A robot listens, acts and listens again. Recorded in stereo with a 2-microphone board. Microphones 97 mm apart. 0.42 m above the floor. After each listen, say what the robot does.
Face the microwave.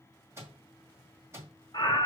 Turn 25° right.
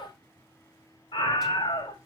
Keep listening.
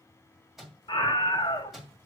Facing the microwave.